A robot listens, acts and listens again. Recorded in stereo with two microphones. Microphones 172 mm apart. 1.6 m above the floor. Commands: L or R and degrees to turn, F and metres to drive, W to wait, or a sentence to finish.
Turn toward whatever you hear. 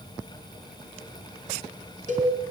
R45
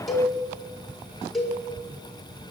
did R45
Facing the cowbell, over 4 m away.